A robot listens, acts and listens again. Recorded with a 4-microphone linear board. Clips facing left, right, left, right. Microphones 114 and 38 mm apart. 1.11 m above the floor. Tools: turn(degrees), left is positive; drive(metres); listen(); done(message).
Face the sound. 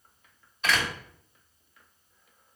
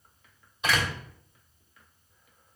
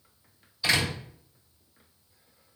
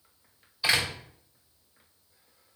turn(degrees=-15)
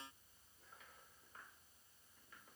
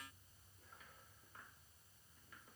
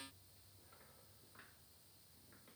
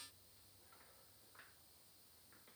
listen()
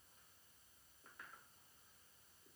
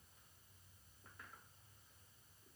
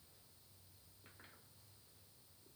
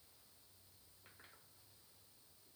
done("I heard a door slam, but can't make it out now. It was about straight ahead or 150° right.")